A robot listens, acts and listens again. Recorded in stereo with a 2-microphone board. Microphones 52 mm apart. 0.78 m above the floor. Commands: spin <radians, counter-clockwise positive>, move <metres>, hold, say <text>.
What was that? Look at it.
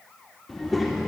spin -0.52
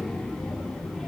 spin 0.52
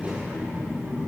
spin -0.70
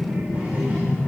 spin -0.61
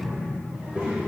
spin -0.44
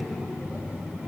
spin -0.44
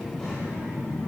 say Facing the child speaking, 2 to 4 m away.